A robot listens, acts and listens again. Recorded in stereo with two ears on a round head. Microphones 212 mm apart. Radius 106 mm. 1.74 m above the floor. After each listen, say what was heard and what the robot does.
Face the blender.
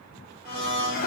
The blender: about 45° left or 135° left. Turn 45° left.
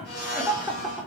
So it is at 85° left. Turn 85° left.
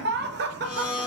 The blender is now 40° left. Turn 40° left.
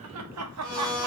Facing the blender, 1 to 2 m away.